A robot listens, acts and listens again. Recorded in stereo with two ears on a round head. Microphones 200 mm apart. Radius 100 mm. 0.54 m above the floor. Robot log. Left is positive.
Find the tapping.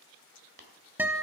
note: The tapping: about 45° right or 135° right.
cmd yaw -45
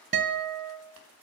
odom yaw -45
cmd idle
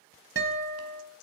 cmd idle
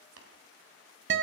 note: So it is at 85° right.
cmd yaw -85
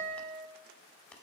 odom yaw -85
cmd idle
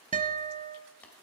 cmd idle
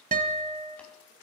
end: I heard tapping from this way, but can't make it out now.